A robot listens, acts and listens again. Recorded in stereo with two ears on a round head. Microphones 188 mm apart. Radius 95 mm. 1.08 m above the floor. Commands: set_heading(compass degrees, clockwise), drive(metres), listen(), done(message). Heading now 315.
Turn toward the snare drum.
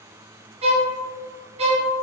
listen()
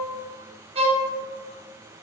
listen()
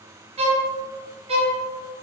done("I can't make out a snare drum, only a violin.")